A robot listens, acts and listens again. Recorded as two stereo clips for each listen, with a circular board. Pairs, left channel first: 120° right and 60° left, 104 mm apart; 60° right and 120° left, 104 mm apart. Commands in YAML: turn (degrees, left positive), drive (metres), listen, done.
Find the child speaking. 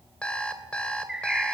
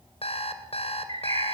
listen: true
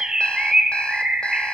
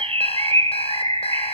listen: true
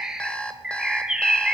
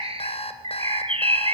done: "I can't make out a child speaking, only a bird and an alarm clock."